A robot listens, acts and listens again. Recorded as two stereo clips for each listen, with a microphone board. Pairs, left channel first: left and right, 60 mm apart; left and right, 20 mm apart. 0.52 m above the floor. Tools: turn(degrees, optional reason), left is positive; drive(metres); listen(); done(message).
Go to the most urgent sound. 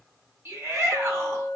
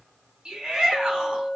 turn(degrees=-40, reason="The shout: about 40° right or 140° right.")
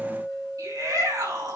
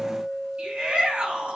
turn(degrees=-105, reason="So it is at 105° right.")
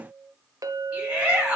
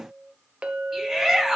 turn(degrees=-20, reason="The shout is now 20° right.")
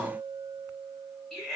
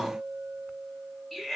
drive(metres=1.0)
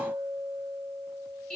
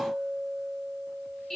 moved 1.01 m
turn(degrees=10, reason="The shout is now 10° left.")
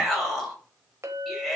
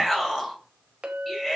drive(metres=1.0)
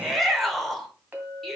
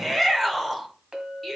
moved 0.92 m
drive(metres=1.0)
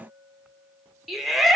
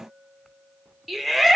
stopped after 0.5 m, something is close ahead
done("Arrived at the shout, straight ahead.")